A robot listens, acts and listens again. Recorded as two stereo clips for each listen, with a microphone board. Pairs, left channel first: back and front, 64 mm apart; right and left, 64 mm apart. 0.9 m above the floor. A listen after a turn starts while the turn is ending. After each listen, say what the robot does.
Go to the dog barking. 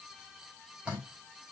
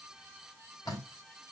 Keep listening.
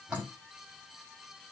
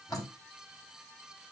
Keep listening.
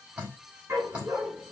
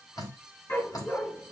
Turn 40° right.
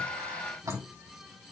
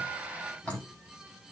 Keep listening.
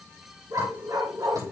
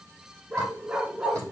Turn 15° left.
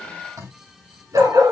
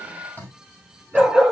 Drive 1.0 m forward.
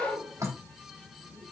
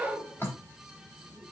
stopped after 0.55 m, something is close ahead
Blocked. The dog barking is further on, straight ahead.